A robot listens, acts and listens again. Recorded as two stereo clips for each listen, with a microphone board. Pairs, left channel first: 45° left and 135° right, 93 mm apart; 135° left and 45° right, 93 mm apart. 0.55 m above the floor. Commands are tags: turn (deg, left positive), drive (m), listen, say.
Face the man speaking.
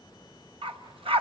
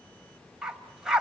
<listen/>
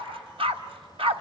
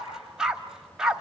<listen/>
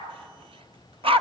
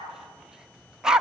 <say>I can't make out a man speaking, only a dog barking.</say>